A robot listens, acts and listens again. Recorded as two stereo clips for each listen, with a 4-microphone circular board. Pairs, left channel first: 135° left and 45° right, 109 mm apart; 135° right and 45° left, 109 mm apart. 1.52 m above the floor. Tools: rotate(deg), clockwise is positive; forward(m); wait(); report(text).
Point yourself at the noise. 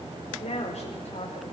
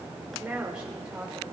rotate(-130)
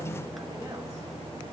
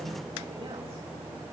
wait()
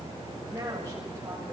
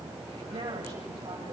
rotate(-15)
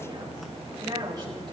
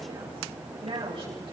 report("Facing the woman speaking, over 4 m away.")